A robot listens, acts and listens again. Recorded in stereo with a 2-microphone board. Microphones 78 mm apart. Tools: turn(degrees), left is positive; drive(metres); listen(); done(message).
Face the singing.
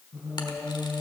turn(degrees=-35)
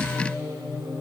turn(degrees=-100)
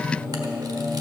turn(degrees=50)
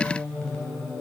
turn(degrees=15)
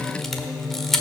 done("Found it: singing, straight ahead.")